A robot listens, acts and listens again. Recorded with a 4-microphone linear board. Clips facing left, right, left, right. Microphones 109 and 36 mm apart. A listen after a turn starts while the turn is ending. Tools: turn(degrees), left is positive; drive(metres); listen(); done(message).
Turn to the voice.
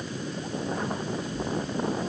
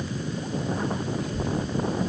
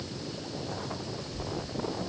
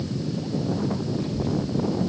turn(degrees=-50)
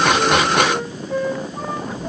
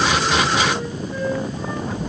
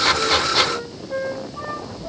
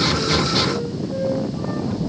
turn(degrees=-80)
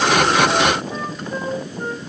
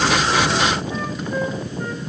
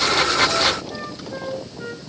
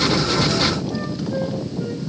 listen()
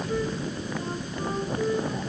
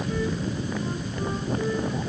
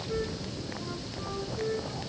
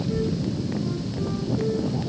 done("Facing the child speaking, 2 to 4 m away.")